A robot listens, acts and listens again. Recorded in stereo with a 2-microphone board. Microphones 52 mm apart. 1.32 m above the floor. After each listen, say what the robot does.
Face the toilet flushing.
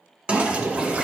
Turn 25° right.
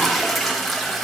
Facing the toilet flushing, under 1 m away.